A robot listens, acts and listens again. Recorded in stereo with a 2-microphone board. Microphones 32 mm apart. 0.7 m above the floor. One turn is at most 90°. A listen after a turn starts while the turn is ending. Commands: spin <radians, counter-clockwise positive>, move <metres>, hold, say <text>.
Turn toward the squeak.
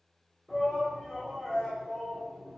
hold
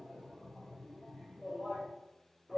hold
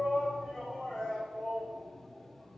say I can't make out a squeak, only a shout.